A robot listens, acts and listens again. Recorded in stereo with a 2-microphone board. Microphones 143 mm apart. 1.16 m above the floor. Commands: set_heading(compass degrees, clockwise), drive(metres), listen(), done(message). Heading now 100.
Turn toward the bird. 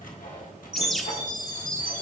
set_heading(70)
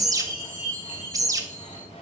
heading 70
set_heading(95)
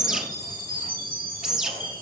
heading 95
done("Facing the bird, under 1 m away.")